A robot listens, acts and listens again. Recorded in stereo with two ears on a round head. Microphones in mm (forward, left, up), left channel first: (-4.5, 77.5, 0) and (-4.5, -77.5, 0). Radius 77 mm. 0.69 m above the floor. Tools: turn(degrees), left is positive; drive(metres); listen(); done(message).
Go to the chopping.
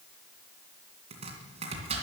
turn(degrees=-40)
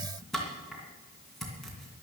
drive(metres=1.0)
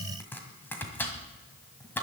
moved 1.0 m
turn(degrees=10)
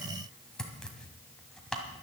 drive(metres=1.0)
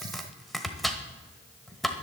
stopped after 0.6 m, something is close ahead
done("Arrived at the chopping, straight ahead.")